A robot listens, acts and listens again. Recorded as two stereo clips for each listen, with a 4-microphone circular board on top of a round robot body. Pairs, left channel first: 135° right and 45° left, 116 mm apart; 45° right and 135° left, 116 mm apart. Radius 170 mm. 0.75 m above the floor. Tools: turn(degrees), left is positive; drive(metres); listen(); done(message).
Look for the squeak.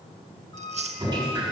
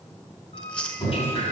turn(degrees=-80)
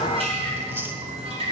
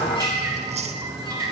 listen()
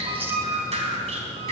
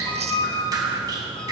done("Found it: a squeak, straight ahead.")